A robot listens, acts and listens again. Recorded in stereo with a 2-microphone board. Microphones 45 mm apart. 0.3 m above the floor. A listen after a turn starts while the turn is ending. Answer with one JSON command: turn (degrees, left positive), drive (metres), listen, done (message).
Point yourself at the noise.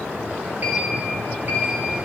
{"turn": -40}
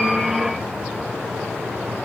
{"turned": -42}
{"listen": true}
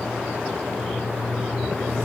{"done": "Facing the sliding door."}